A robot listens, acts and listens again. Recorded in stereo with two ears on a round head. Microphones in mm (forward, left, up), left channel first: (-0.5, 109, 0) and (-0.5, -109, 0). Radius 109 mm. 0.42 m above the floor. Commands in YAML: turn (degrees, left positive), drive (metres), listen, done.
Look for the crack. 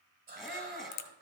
turn: 90
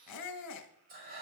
done: "I heard a crack from this way, but can't make it out now."